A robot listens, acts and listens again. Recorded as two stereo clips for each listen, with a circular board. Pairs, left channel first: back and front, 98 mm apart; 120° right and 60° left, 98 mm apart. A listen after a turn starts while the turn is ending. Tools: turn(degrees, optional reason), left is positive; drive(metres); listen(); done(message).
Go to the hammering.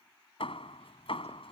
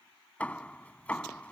turn(degrees=165, reason="The hammering: 165° left.")
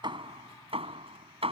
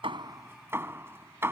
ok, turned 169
drive(metres=1.0)
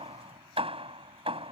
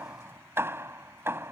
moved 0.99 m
drive(metres=1.0)
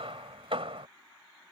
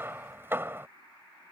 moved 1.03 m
drive(metres=1.0)
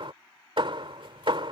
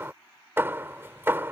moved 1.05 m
drive(metres=1.0)
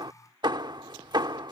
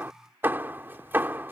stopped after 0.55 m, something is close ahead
done("Arrived at the hammering, straight ahead.")